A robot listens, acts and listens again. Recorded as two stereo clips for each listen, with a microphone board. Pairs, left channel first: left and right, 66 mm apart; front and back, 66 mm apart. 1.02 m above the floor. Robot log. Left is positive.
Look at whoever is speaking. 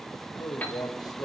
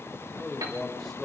note: The man speaking: 85° left.
cmd yaw +85
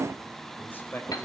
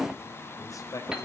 note: The man speaking is now 30° left.
cmd yaw +30
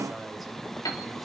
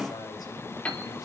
cmd idle
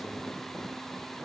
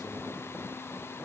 cmd idle
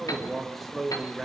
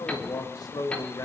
end: Found it: a man speaking, straight ahead.